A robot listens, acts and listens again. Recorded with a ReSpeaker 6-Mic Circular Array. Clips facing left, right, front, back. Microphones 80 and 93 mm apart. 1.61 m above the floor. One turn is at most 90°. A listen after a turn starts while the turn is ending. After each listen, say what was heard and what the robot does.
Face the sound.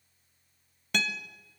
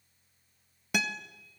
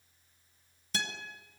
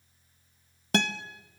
The guitar: 170° right. Turn 90° right.
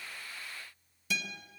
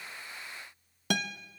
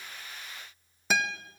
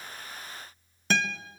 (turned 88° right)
The guitar is now 80° right. Turn 80° right.
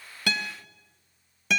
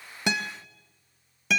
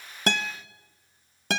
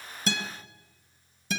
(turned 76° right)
Facing the guitar.